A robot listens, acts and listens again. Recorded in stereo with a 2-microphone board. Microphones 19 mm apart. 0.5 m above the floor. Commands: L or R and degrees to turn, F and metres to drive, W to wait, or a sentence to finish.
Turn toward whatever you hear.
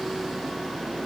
W
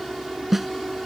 R30
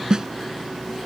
R140
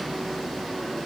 W
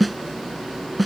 Found it: a snare drum, straight ahead.